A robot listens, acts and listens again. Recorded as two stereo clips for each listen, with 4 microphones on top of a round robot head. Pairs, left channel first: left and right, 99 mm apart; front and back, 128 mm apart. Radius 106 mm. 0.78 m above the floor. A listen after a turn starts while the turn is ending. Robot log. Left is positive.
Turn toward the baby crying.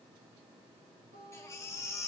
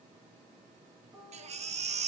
note: The baby crying: 155° left.
cmd yaw +155
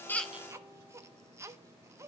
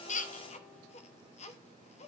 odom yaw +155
note: The baby crying is now 25° right.
cmd yaw -25
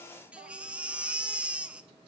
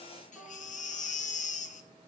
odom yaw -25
note: The baby crying is now 10° right.
cmd yaw -10
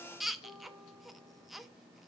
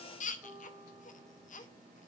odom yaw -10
end: Facing the baby crying, under 1 m away.